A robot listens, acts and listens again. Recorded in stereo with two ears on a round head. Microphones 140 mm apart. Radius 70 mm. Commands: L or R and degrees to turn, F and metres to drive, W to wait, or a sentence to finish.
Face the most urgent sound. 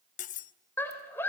L30
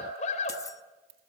L130
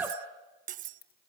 R10
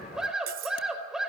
Found it: a scream, straight ahead, over 4 m away.